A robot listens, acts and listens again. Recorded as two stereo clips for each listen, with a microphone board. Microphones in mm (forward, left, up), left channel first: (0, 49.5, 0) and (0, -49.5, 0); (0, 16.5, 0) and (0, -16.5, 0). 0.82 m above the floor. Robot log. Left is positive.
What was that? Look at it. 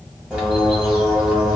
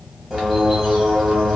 cmd yaw -30
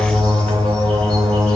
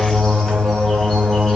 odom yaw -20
note: So it is at 10° left.
cmd yaw +10
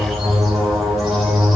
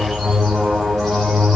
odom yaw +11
end: Facing the bird, 1 to 2 m away.